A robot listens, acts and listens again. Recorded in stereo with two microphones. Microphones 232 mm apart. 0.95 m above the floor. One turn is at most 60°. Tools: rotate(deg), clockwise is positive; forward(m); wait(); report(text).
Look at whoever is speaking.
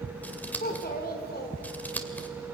rotate(-45)
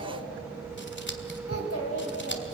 rotate(-60)
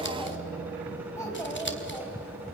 rotate(-10)
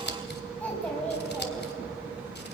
report("Found it: a child speaking, straight ahead.")